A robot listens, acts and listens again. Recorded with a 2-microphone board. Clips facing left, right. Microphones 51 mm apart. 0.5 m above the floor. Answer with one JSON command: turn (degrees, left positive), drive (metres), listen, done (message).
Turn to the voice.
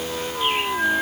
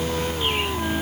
{"listen": true}
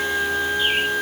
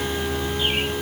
{"listen": true}
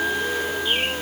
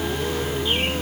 {"done": "I can't make out anyone speaking to turn to."}